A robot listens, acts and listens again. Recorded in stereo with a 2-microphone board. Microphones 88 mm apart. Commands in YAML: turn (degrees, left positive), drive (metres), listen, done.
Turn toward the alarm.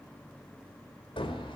listen: true
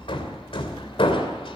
listen: true
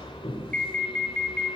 turn: 15
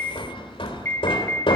turn: 150
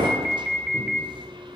done: "Found it: an alarm, straight ahead."